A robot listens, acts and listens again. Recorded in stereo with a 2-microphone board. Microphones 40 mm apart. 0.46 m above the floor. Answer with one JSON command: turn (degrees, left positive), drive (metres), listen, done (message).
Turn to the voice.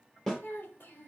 {"turn": 55}
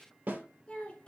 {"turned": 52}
{"turn": 30}
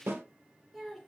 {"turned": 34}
{"done": "Facing the child speaking, 1 to 2 m away."}